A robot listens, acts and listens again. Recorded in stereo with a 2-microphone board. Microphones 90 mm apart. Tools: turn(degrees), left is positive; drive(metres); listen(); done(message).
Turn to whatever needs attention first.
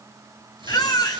turn(degrees=50)
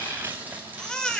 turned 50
turn(degrees=10)
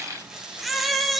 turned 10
done("Facing the baby crying.")